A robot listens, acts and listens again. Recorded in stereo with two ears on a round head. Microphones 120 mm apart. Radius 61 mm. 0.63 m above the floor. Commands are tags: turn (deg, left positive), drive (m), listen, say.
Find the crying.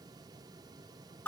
<listen/>
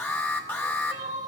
<turn deg="-60"/>
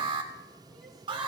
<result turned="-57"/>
<listen/>
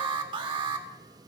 <listen/>
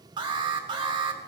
<say>I heard crying, but can't make it out now. It was about straight ahead or 65° right.</say>